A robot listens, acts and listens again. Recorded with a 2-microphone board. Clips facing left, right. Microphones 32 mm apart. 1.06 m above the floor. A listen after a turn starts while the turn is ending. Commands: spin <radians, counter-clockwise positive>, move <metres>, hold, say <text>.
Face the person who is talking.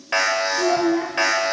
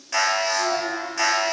spin 0.70
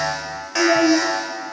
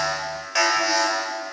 spin 1.75
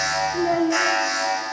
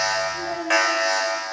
spin 0.52
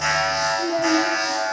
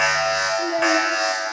spin -0.35
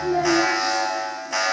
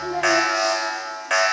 hold
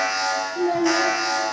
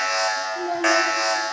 say Facing the child speaking, 1 to 2 m away.